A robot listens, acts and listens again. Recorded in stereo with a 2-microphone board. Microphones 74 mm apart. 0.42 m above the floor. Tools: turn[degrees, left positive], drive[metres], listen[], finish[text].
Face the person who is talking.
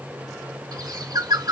Action: listen[]
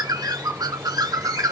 Action: listen[]
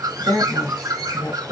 Thought: The woman speaking: about 55° left or 125° left.
Action: turn[55]
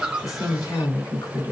Thought: So it is at 60° left.
Action: turn[60]
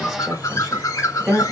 Action: finish[Found it: a woman speaking, straight ahead.]